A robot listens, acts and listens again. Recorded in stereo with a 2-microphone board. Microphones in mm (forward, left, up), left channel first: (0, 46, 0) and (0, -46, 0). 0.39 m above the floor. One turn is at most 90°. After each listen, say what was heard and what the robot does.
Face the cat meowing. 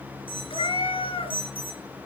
Turn 90° left.
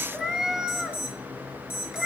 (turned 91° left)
Facing the cat meowing.